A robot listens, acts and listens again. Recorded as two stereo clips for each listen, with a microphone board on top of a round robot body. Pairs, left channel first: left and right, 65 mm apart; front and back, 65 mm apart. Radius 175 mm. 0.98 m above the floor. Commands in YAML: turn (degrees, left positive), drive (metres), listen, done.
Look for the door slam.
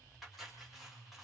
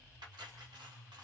listen: true
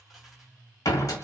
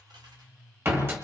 turn: 125
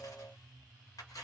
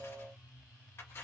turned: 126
done: "I heard a door slam from this way, but can't make it out now."